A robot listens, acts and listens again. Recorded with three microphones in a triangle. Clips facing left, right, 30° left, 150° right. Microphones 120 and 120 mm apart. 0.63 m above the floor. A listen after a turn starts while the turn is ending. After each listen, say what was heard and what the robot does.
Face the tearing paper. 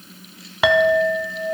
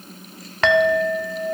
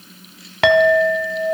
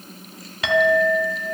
Keep listening.
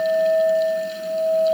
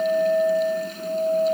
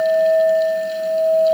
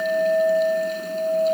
Keep listening.
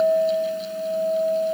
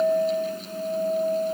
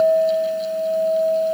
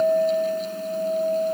I can't make out tearing paper to turn to.